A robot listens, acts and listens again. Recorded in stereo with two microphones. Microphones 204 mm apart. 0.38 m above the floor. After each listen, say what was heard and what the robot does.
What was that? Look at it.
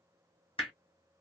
The hammering: about 25° left or 155° left. Turn 25° left.
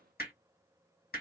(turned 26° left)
So it is at 125° left. Turn 125° left.
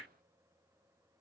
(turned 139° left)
Nothing new. It was at 10° right. Turn 10° right.
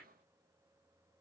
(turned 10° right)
Keep listening.
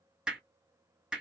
Facing the hammering.